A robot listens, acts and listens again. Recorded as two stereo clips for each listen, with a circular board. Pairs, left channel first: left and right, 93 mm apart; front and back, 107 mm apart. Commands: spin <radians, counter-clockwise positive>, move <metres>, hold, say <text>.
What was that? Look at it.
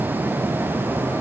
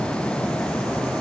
hold
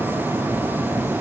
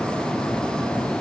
hold
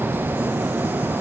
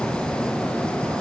say I can't make out anything to turn to.